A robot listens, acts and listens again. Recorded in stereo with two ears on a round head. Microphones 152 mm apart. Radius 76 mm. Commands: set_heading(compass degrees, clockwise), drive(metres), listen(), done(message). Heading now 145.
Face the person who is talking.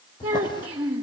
set_heading(170)
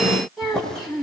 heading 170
done("Found it: a child speaking, straight ahead.")